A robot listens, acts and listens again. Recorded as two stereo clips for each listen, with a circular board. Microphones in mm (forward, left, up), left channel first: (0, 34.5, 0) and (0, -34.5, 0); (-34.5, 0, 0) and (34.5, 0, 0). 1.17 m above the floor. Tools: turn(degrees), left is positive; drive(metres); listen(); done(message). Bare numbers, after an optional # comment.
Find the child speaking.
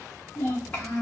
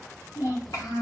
# The child speaking: 160° left.
turn(160)
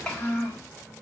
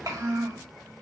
# The child speaking is now 25° left.
turn(25)
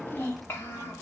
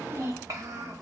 # The child speaking is now 40° left.
turn(40)
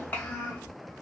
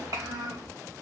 # The child speaking is now 30° left.
turn(30)
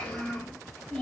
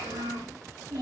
# The child speaking is now 10° left.
turn(10)
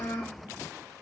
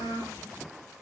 done("Found it: a child speaking, straight ahead.")